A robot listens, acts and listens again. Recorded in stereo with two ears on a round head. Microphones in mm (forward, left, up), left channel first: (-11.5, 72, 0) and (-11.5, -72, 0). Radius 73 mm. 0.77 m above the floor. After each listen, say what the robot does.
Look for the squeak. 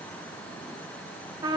Keep listening.
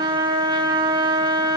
Keep listening.
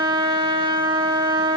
I can't make out a squeak, only a trumpet.